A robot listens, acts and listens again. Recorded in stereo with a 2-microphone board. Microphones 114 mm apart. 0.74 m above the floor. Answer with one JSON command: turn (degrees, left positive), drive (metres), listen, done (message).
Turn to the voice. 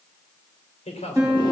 {"turn": 90}
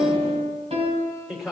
{"done": "Found it: a man speaking, straight ahead, 2 to 4 m away."}